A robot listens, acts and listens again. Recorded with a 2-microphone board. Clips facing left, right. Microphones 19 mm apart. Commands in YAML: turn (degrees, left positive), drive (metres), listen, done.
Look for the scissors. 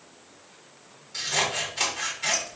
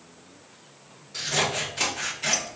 turn: 30
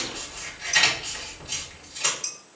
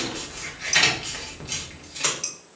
turn: -35
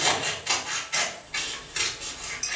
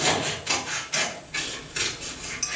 done: "Facing the scissors."